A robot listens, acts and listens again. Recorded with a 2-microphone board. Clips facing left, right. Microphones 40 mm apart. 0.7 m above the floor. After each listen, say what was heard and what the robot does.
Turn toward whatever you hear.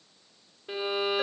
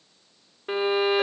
The violin: about 60° right or 120° right. Turn 60° right.
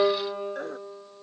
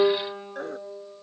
So it is at 65° right. Turn 65° right.
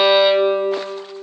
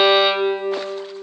Found it: a violin, straight ahead, under 1 m away.